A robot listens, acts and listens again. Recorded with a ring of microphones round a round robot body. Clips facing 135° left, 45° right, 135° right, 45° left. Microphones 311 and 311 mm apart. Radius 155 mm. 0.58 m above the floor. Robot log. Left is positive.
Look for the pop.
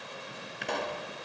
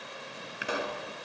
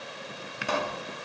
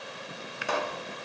note: The pop: 130° right.
cmd yaw -130
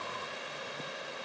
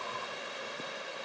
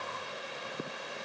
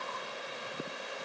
end: I heard a pop from this way, but can't make it out now.